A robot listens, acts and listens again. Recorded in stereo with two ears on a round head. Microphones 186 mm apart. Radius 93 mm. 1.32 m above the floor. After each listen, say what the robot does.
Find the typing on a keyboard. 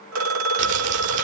Keep listening.
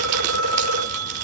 Keep listening.
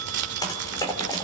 Turn 20° left.
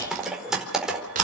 Found it: typing on a keyboard, straight ahead, over 4 m away.